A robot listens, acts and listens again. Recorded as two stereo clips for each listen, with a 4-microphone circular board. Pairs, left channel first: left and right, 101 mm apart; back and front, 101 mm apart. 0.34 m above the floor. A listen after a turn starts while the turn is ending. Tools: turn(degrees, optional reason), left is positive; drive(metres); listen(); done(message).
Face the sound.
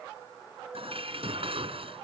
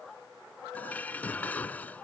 turn(degrees=-105, reason="The dishes clattering: 105° right.")
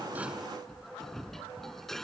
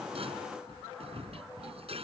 done("Found it: dishes clattering, straight ahead.")